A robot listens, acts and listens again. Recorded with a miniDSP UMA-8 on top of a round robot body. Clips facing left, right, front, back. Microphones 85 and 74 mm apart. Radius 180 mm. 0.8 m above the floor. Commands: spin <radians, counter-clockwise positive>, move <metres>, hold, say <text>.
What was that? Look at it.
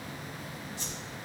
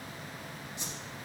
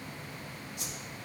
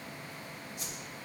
spin -0.35
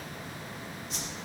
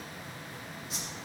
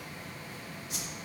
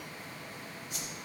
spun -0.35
say Found it: a whoosh, straight ahead, 2 to 4 m away.